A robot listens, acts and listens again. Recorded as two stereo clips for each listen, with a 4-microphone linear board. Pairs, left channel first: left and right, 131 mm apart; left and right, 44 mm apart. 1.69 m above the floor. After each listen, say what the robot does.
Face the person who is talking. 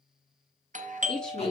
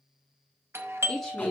Turn 30° left.
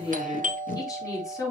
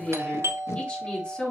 Turn 155° left.
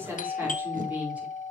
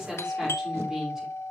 Turn 10° right.
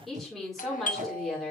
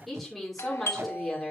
Facing the woman speaking.